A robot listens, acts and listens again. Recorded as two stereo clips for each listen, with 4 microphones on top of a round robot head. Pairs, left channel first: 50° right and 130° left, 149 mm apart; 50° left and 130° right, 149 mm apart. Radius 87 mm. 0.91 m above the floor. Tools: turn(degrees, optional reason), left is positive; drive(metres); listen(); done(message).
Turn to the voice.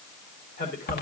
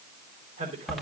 turn(degrees=-80, reason="The man speaking: 80° right.")
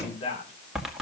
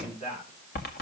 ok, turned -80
done("Found it: a man speaking, straight ahead.")